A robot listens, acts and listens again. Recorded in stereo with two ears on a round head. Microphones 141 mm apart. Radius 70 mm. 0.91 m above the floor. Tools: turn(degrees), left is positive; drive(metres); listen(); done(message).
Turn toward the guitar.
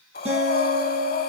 turn(degrees=-40)
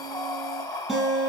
done("Facing the guitar, over 4 m away.")